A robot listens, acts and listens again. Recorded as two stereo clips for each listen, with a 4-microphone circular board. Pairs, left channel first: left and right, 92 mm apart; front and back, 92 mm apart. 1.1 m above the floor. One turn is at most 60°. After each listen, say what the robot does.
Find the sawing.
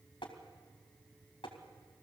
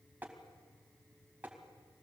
Keep listening.
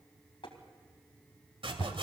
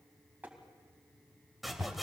Turn 60° right.
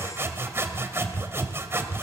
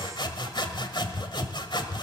Turn 30° right.
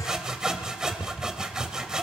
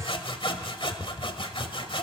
Turn 10° right.
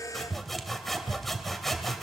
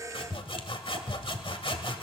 Facing the sawing, 1 to 2 m away.